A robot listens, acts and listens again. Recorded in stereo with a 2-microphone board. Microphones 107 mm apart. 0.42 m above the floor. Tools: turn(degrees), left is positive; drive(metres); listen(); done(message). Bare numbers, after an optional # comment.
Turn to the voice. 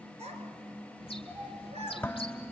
turn(-90)
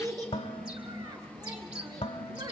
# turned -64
# So it is at 35° right.
turn(-35)
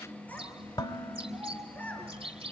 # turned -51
# The child speaking is now 15° left.
turn(15)
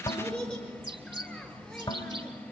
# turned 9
done("Found it: a child speaking, straight ahead, over 4 m away.")